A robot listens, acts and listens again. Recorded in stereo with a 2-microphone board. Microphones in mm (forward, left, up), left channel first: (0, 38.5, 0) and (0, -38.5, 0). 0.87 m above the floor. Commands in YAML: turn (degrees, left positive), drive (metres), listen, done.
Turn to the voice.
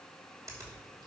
listen: true
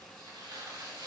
listen: true
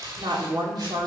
turn: -75
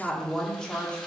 turn: 15
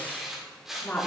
turn: 20
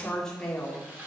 turn: 10
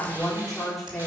done: "Found it: a woman speaking, straight ahead, 2 to 4 m away."